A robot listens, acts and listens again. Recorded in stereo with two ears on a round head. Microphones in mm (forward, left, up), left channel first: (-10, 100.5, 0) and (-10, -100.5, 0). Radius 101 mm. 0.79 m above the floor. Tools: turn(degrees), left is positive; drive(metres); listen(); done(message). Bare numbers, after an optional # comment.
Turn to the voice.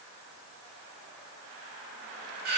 listen()
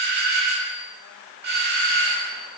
listen()
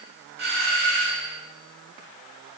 done("I can't make out anyone speaking, only a doorbell.")